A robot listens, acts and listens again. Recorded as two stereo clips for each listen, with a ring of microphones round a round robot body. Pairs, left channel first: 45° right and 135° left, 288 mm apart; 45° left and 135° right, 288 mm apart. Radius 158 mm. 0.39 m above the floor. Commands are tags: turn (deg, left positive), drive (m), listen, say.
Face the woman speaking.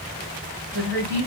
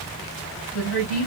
<turn deg="80"/>
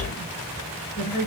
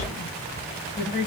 <turn deg="-15"/>
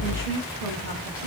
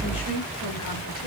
<say>Found it: a woman speaking, straight ahead.</say>